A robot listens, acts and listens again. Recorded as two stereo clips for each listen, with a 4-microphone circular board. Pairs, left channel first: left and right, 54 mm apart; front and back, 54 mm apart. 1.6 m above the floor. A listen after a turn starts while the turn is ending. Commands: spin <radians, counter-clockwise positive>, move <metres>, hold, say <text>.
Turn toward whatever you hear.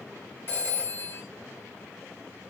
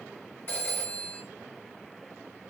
spin 0.79
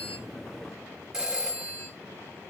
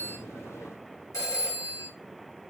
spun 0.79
spin -0.17
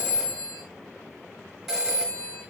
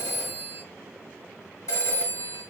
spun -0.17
say Found it: a phone ringing, straight ahead, 1 to 2 m away.